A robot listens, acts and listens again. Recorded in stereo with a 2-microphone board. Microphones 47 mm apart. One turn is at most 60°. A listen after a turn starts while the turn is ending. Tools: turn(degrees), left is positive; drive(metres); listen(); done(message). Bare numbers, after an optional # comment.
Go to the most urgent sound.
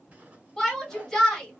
turn(30)
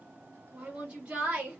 # So it is at 25° right.
turn(-25)
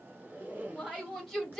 drive(1.0)
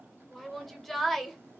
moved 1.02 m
drive(1.0)
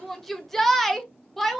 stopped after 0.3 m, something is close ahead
done("Arrived at the shout, straight ahead.")